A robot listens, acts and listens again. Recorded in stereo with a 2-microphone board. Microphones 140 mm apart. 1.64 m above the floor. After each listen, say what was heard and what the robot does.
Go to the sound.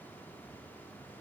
Keep listening.
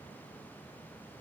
Keep listening.
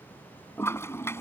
The toilet flushing: about 20° left or 160° left. Turn 20° left.
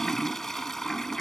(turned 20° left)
Drive 1.0 m forward.
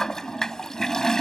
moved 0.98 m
Drive 1.0 m forward.
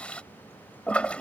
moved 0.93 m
The toilet flushing is now 10° left. Turn 10° left.
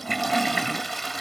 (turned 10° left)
Drive 1.0 m forward.
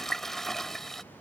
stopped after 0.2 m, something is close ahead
I am next to the toilet flushing.